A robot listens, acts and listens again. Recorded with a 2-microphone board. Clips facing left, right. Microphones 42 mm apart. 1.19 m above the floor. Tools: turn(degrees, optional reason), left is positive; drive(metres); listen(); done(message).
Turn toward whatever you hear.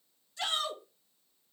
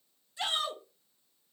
turn(degrees=-20, reason="The shout: about 20° right or 160° right.")
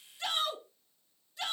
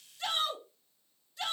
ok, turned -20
done("Found it: a shout, straight ahead, 2 to 4 m away.")